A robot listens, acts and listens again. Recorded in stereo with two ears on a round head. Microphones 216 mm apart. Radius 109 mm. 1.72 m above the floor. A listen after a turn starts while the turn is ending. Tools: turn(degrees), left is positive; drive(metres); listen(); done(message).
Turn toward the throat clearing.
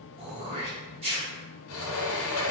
turn(degrees=-25)
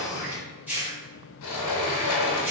turn(degrees=-10)
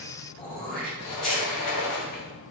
done("Found it: throat clearing, straight ahead.")